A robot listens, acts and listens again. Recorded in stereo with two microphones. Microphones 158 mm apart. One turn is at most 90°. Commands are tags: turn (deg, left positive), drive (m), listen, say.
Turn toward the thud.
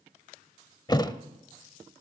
<turn deg="25"/>
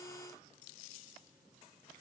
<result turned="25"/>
<listen/>
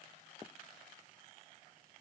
<say>I heard a thud, but can't make it out now. It was about straight ahead or 130° left.</say>